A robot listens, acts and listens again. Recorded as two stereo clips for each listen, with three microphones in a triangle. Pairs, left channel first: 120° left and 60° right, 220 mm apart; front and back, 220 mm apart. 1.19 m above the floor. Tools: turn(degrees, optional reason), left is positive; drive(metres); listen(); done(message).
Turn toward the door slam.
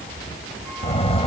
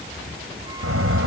turn(degrees=-175, reason="The door slam: 175° right.")
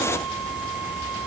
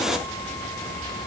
done("Facing where the door slam came from. I can't hear it now.")